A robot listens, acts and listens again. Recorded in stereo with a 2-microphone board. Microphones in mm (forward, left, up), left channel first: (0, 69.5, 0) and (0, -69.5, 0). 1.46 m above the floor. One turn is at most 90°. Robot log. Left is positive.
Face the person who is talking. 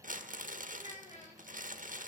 note: The child speaking: about 60° left or 120° left.
cmd yaw +60
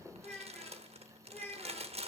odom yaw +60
note: So it is at 15° left.
cmd yaw +15
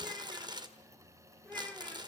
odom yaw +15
note: The child speaking is now 10° left.
cmd yaw +10
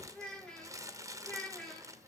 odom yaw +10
end: Found it: a child speaking, straight ahead, 2 to 4 m away.